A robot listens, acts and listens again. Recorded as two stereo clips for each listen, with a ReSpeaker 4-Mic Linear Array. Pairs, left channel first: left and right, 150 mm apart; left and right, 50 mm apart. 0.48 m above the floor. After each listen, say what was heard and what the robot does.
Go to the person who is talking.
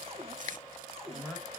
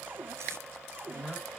Turn 30° left.
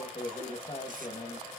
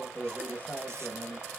So it is at 140° left. Turn 140° left.
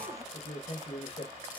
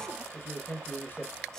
The man speaking is now 50° left. Turn 50° left.
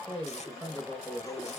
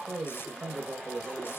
The man speaking is now 10° left. Turn 10° left.
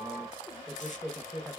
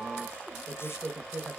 Drive 1.0 m forward.
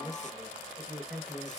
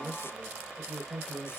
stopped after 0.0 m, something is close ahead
Something is in my way. I am facing the man speaking but have not reached it.